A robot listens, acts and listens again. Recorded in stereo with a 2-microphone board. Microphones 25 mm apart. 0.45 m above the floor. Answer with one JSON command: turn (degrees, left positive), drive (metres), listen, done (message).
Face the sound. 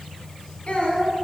{"turn": 55}
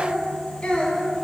{"turn": 45}
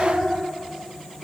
{"turn": -10}
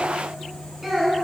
{"done": "Facing the child speaking."}